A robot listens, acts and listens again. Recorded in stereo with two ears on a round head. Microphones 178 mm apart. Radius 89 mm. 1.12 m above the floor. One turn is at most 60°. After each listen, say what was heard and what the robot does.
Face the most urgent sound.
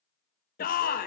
The shout: about 50° left or 130° left. Turn 50° left.
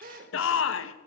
So it is at 80° left. Turn 60° left.
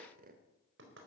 Nothing new. It was at 20° left. Turn 20° left.
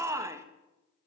The shout is now 15° right. Turn 15° right.
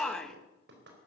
Facing the shout, 1 to 2 m away.